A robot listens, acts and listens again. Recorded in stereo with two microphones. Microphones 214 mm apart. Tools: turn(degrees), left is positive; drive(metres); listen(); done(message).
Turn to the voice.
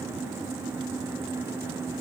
listen()
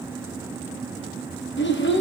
turn(degrees=60)
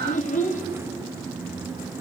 turn(degrees=40)
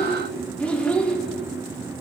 done("Found it: a child speaking, straight ahead.")